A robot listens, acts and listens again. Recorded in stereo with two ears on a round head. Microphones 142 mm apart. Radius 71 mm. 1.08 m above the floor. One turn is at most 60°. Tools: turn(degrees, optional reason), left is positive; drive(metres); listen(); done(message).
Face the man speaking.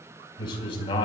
turn(degrees=35, reason="The man speaking: about 35° left or 145° left.")
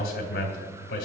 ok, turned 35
turn(degrees=60, reason="So it is at 100° left.")
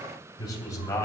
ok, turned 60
turn(degrees=20, reason="The man speaking is now 20° left.")
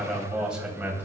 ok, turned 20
turn(degrees=-10, reason="The man speaking is now 10° right.")
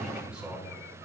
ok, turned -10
done("Found it: a man speaking, straight ahead.")